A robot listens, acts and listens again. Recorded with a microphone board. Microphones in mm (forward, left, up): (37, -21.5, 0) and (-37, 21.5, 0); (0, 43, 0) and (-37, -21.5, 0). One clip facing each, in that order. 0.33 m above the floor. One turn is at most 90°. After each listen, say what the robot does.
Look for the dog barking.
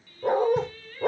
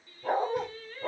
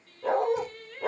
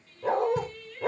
Turn 25° right.
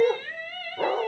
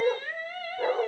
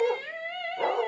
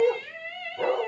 Turn 20° right.
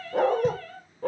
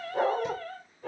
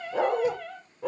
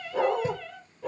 Found it: a dog barking, straight ahead, over 4 m away.